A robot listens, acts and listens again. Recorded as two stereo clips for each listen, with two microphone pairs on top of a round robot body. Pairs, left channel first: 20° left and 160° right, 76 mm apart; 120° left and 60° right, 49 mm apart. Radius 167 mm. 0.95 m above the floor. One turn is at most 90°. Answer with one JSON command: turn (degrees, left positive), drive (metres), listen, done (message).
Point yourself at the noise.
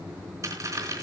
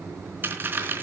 {"turn": -90}
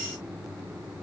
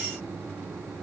{"turn": -20}
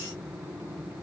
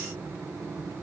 {"done": "I heard a dropped coin from this way, but can't make it out now."}